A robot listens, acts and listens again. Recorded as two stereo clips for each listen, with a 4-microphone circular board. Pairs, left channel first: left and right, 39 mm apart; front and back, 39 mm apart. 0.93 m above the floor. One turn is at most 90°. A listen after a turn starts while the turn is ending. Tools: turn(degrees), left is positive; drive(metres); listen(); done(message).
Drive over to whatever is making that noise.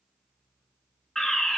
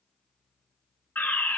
turn(degrees=10)
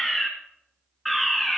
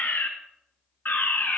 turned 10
drive(metres=1.0)
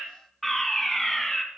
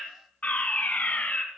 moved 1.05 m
drive(metres=1.0)
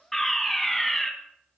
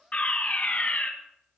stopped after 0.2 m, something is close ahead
done("Arrived at the fire alarm, straight ahead.")